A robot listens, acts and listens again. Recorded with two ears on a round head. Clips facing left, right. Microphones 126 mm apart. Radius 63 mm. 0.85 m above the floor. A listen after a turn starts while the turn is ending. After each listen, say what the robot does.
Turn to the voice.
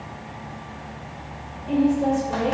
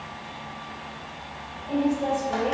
Turn 60° left.
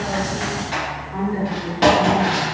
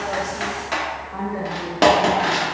Turn 20° left.
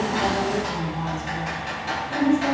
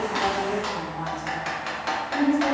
Turn 10° left.
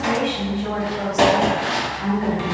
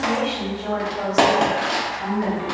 Facing the woman speaking.